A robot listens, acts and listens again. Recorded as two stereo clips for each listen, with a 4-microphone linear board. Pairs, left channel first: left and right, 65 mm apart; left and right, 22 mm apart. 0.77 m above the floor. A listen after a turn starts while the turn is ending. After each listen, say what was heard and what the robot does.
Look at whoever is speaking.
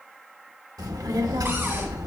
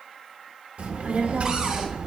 Turn 90° right.
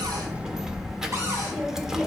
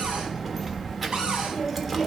Found it: a child speaking, straight ahead.